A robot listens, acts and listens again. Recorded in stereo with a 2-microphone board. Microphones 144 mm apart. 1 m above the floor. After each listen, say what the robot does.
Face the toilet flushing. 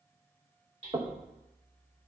Keep listening.
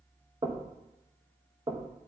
Keep listening.
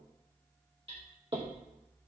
I can't make out a toilet flushing, only hammering and knocking.